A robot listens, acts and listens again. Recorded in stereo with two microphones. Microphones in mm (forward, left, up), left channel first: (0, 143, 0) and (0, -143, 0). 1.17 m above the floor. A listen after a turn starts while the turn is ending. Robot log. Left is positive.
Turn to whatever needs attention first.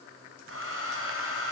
cmd idle
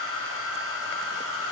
cmd idle
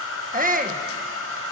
note: The shout: about 30° right or 150° right.
cmd yaw -30
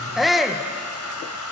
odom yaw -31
end: Found it: a shout, straight ahead.